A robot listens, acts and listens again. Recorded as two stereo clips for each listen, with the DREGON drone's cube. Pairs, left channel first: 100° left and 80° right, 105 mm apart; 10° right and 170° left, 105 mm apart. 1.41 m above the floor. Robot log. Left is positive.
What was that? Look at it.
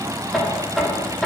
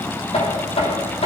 end: Facing the knocking, 2 to 4 m away.